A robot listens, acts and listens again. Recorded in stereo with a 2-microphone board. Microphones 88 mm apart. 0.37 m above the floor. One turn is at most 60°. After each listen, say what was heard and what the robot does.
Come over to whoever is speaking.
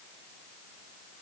Keep listening.
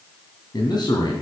The man speaking: about 55° left or 125° left. Turn 55° left.
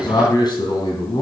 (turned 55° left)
So it is at 65° left. Turn 60° left.
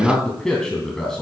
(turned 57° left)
Drive 1.0 m forward.
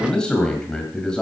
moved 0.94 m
The man speaking is now 10° left. Turn 10° left.
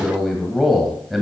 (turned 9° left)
Drive 1.0 m forward.
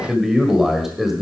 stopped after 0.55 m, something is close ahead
I am next to the man speaking.